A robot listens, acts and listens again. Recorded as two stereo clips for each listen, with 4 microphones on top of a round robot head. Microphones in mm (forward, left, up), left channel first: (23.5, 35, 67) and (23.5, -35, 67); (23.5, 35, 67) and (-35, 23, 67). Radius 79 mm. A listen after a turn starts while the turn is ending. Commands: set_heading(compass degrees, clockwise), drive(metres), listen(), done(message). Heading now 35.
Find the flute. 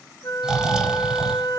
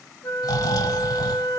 set_heading(345)
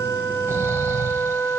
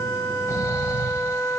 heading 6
set_heading(346)
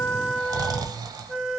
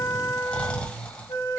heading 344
done("Facing the flute.")